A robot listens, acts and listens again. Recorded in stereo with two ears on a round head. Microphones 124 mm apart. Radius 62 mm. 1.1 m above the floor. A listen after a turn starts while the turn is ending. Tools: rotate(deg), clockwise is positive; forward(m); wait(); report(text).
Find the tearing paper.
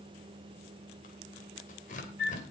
rotate(-60)
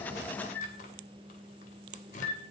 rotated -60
rotate(-55)
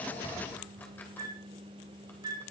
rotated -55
wait()
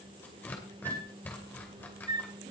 rotate(-15)
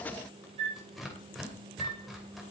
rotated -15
report("Found it: tearing paper, straight ahead, 2 to 4 m away.")